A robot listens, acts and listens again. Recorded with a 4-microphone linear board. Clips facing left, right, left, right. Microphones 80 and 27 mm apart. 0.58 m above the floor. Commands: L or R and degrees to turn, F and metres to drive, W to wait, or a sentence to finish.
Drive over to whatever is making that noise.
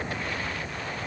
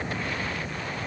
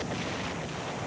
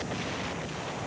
W
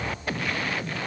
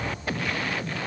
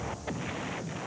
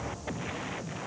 W
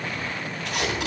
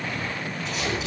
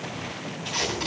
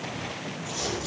L90
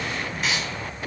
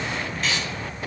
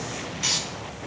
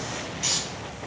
L10
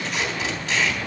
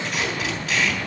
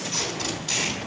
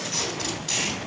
F1.0
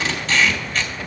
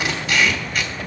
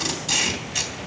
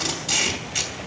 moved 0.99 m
R10
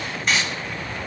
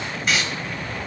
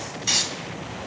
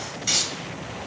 F1.0
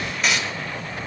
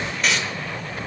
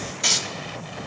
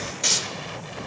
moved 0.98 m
F1.0
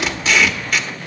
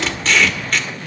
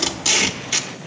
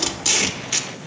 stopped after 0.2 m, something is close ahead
Arrived at the tape being pulled, straight ahead.